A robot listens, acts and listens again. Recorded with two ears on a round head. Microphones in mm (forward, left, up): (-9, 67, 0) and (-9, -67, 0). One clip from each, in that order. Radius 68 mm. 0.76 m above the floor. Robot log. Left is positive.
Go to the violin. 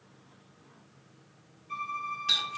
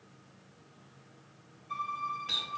cmd yaw -30
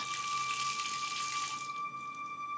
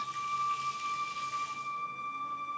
note: So it is at 145° right.
cmd yaw -145
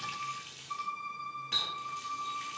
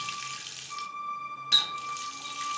note: The violin is now 20° left.
cmd yaw +20
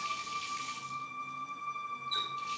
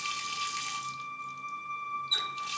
cmd fwd 1.0
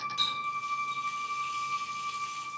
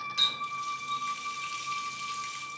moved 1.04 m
cmd fwd 1.0
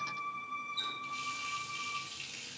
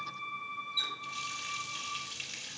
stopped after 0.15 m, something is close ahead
end: Blocked. The violin is further on, straight ahead.